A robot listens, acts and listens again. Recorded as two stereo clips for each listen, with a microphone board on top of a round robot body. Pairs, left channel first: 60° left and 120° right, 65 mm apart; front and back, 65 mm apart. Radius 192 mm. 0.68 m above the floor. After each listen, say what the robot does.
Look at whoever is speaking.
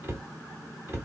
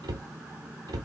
Keep listening.
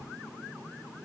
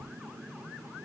Keep listening.
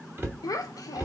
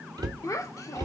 Turn 35° left.
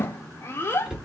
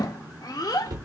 Found it: a child speaking, straight ahead.